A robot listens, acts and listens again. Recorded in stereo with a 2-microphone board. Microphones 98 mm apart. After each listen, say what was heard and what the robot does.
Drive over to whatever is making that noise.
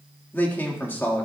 The man speaking: about 20° left or 160° left. Turn 20° left.
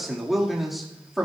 Drive 1.0 m forward.
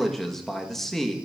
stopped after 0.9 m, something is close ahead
I am next to the man speaking.